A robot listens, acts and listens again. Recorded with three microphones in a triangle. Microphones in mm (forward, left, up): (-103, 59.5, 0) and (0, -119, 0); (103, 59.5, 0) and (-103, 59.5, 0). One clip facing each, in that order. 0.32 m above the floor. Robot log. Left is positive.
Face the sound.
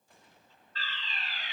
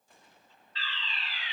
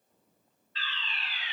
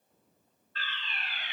note: The fire alarm: 155° left.
cmd yaw +155
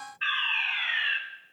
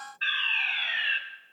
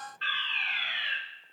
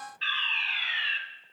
note: The fire alarm is now 15° right.
cmd yaw -15
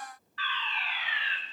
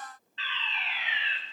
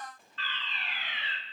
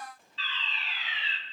end: Facing the fire alarm.